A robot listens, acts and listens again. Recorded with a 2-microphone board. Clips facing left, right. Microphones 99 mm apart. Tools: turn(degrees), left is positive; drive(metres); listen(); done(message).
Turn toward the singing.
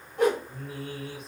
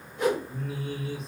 turn(degrees=55)
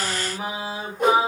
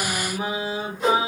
done("Found it: singing, straight ahead, 1 to 2 m away.")